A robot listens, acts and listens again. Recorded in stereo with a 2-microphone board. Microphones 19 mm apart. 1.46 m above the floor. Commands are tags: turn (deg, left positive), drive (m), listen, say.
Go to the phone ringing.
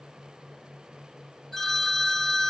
<turn deg="30"/>
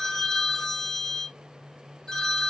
<turn deg="145"/>
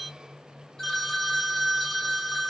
<turn deg="15"/>
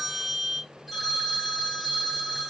<drive m="1.0"/>
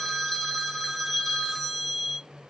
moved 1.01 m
<drive m="1.0"/>
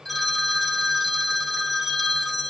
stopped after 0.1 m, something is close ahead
<say>I am next to the phone ringing.</say>